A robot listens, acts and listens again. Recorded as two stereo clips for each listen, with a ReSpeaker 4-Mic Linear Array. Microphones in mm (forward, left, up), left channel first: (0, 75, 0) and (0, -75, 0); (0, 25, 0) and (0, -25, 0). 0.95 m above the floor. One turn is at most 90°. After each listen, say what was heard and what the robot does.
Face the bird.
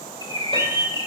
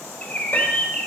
The bird: about 25° left or 155° left. Turn 25° left.
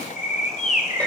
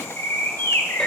So it is at 120° left. Turn 90° left.
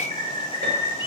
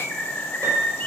The bird is now 35° left. Turn 35° left.
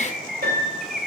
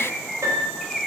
Found it: a bird, straight ahead, under 1 m away.